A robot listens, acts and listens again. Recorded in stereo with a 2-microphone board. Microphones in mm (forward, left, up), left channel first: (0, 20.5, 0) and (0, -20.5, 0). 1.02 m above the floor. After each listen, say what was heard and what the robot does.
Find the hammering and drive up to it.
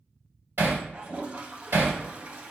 The hammering: about 65° right or 115° right. Turn 65° right.
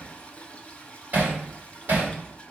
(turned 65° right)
So it is at 50° right. Turn 50° right.
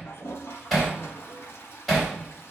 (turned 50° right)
Drive 1.0 m forward.
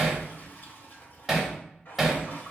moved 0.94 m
Drive 1.0 m forward.
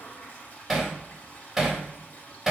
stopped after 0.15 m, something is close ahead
Arrived at the hammering, straight ahead.